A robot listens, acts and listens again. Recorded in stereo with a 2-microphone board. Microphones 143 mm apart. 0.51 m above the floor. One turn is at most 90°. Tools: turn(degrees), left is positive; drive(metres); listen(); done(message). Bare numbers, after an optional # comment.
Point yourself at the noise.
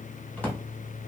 turn(30)
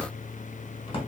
# So it is at 140° left.
turn(90)
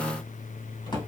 # The drawer is now 30° left.
turn(30)
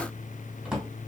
done("Facing the drawer.")